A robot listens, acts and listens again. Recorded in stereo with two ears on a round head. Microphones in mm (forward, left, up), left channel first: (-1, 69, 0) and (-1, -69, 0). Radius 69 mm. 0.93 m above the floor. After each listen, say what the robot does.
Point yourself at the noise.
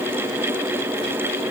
Keep listening.
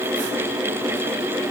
Keep listening.
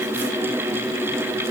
I can't make out anything to turn to.